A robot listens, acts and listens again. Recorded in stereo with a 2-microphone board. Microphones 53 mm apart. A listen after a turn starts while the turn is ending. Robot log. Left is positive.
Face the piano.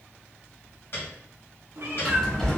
note: The piano: about 55° left or 125° left.
cmd yaw +55
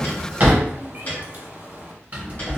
note: So it is at 45° left.
cmd yaw +45
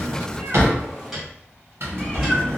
end: Found it: a piano, straight ahead, 1 to 2 m away.